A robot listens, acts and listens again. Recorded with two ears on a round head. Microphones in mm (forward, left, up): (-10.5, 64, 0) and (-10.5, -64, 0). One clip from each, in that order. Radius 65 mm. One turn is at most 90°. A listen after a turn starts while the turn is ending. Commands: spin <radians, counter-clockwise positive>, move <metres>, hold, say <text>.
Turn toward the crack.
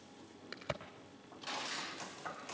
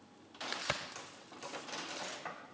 spin -1.05
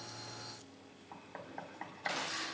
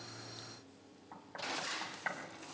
hold
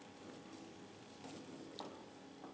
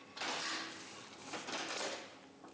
say I heard a crack, but can't make it out now. It was about straight ahead or 60° right.